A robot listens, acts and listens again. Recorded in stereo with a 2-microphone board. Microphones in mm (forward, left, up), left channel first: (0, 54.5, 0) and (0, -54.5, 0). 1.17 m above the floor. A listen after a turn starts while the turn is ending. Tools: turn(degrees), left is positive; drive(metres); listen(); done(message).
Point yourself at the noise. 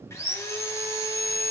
turn(degrees=25)
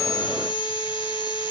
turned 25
turn(degrees=125)
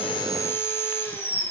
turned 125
turn(degrees=25)
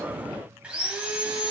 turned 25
turn(degrees=-10)
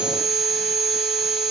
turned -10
done("Found it: sawing, straight ahead, 2 to 4 m away.")